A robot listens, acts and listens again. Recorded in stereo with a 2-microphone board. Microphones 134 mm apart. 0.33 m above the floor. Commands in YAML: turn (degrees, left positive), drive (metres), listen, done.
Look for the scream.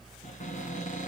listen: true
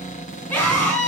turn: 30
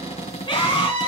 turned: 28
turn: 135
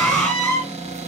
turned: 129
done: "Facing the scream."